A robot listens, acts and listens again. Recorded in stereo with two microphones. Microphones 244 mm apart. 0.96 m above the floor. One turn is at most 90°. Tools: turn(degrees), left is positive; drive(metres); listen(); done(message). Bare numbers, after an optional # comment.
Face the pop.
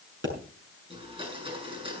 # The pop: about 55° right or 125° right.
turn(-55)
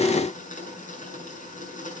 listen()
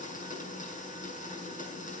done("I heard a pop, but can't make it out now. It was about straight ahead or 70° right.")